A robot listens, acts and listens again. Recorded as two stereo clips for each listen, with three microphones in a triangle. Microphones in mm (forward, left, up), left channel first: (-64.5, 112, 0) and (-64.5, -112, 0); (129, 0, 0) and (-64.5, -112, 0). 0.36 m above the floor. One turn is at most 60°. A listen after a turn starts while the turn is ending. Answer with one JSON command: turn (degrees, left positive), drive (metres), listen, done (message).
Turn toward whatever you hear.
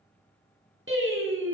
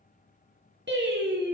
{"turn": -60}
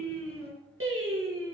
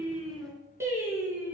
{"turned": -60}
{"turn": -60}
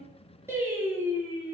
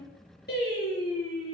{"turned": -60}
{"turn": -10}
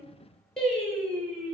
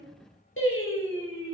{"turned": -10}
{"done": "Found it: singing, straight ahead, 2 to 4 m away."}